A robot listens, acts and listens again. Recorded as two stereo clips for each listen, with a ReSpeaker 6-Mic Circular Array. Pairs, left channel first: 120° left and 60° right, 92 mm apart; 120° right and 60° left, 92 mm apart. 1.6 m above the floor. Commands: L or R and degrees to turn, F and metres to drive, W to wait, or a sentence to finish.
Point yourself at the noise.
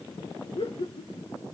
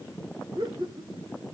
L100
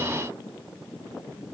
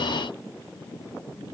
L15
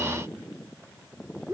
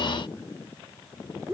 Found it: laughter, straight ahead, 1 to 2 m away.